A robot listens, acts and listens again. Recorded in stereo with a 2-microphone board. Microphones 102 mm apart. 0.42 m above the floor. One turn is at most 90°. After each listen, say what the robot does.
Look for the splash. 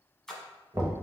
Turn 30° left.
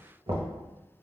Keep listening.
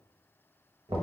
I heard a splash, but can't make it out now. It was about 25° right or 145° left.